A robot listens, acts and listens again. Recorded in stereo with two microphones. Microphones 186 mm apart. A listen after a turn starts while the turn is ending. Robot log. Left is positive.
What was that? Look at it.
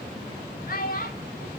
note: The child speaking: about 55° left or 125° left.
cmd yaw +55
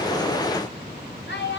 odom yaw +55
note: So it is at 85° left.
cmd yaw +85
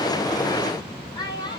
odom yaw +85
note: The child speaking is now 25° left.
cmd yaw +25
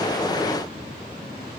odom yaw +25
cmd idle
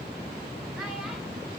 cmd idle
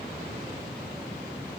end: Facing where the child speaking came from. I can't hear it now.